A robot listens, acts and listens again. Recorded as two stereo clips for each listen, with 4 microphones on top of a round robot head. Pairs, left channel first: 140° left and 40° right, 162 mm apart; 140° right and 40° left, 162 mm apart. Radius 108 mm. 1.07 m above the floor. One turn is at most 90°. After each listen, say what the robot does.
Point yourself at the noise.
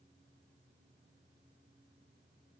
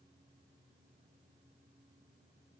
Keep listening.
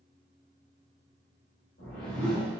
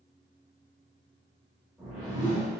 Turn 90° left.
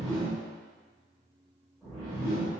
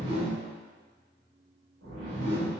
Turn 55° left.
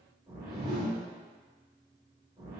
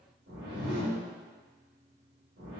Turn 25° left.
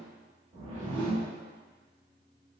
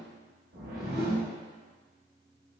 Turn 10° left.
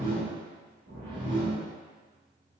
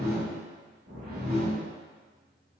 Found it: a whoosh, straight ahead, 1 to 2 m away.